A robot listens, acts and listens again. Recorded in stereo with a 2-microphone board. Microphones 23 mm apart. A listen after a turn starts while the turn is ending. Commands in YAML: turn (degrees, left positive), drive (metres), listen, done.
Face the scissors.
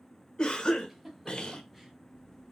turn: -65
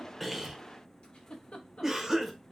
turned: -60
listen: true
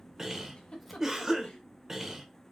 done: "Facing the scissors."